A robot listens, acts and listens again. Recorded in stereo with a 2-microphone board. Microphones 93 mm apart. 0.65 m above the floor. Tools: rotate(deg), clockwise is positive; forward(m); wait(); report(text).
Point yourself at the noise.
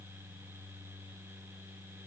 wait()
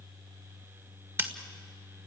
rotate(25)
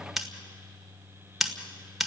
report("Facing the scissors.")